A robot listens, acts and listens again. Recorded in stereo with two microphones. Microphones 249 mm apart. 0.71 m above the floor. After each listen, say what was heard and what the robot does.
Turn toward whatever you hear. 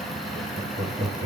The laughter: about 55° right or 125° right. Turn 55° right.
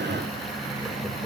So it is at 10° right. Turn 10° right.
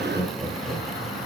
The laughter is now 10° right. Turn 10° right.
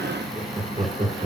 The laughter is now 35° right. Turn 35° right.
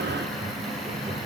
Keep listening.
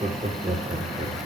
The laughter is now 30° right. Turn 30° right.
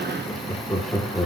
The laughter is now 10° left. Turn 10° left.
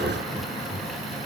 Found it: laughter, straight ahead.